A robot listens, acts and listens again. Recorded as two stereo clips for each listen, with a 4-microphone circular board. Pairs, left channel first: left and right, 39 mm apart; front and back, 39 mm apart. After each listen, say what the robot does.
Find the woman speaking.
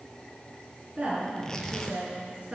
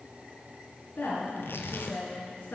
Turn 15° right.
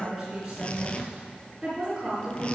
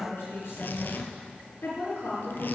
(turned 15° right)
Found it: a woman speaking, straight ahead, over 4 m away.